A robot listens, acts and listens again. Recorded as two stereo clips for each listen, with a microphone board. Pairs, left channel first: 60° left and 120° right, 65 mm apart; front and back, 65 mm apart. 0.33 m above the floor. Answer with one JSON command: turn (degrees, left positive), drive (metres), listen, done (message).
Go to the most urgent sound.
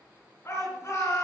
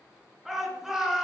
{"turn": 100}
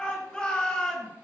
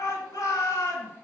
{"turn": -15}
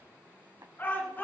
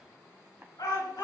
{"drive": 1.0}
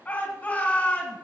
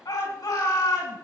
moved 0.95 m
{"drive": 1.0}
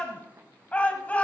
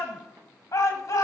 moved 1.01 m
{"drive": 1.0}
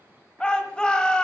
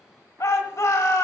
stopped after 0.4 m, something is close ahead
{"turn": -10}
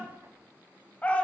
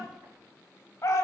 {"done": "I am next to the shout."}